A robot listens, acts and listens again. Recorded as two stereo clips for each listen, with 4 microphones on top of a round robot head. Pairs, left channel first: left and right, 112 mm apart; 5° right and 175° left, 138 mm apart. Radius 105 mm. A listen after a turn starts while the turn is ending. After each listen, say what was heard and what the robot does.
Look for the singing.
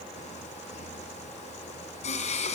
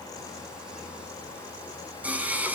The singing: 100° left. Turn 100° left.
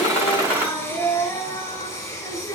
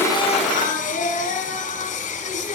The singing is now 20° left. Turn 20° left.
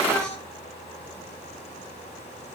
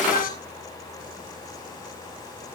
Found it: singing, straight ahead.